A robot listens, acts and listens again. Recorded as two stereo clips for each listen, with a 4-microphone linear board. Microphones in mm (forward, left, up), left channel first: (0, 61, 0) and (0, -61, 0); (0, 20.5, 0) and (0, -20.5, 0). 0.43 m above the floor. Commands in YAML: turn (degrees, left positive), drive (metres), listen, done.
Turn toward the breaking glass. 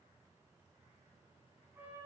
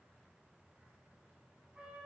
listen: true
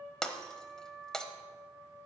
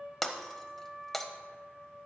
turn: 30
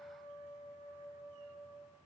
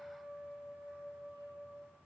listen: true
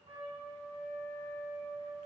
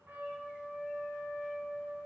done: "I heard breaking glass, but can't make it out now. It was about 25° right or 145° left."